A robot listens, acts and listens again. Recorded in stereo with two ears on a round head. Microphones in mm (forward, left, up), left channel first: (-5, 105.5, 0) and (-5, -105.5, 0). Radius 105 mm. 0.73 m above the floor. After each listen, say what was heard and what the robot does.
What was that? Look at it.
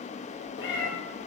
The cat meowing: about 55° left or 125° left. Turn 55° left.
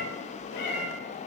So it is at 45° left. Turn 45° left.
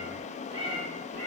The cat meowing is now 30° right. Turn 30° right.
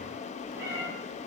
The cat meowing is now 15° right. Turn 15° right.
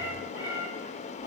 The cat meowing is now 15° right. Turn 15° right.
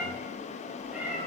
Found it: a cat meowing, straight ahead, 2 to 4 m away.